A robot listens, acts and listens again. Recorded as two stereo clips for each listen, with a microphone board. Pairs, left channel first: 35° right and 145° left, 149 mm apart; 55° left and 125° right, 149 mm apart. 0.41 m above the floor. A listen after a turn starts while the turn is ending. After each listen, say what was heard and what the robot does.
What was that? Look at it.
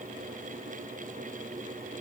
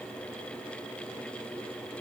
Keep listening.
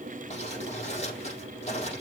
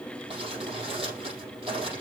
The crumpling: 75° right. Turn 75° right.
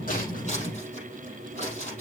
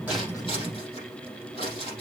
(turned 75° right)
Found it: crumpling, straight ahead.